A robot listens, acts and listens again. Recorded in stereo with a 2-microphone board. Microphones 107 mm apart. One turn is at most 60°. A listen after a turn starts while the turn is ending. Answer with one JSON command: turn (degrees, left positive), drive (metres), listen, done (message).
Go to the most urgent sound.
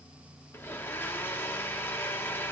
{"listen": true}
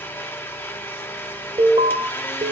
{"turn": -60}
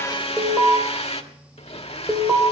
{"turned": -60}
{"turn": -15}
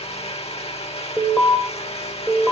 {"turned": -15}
{"drive": 1.0}
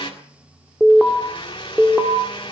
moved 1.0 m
{"turn": -10}
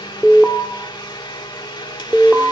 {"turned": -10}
{"drive": 1.0}
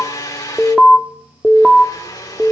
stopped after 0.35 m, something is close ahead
{"done": "Arrived at the alarm, straight ahead."}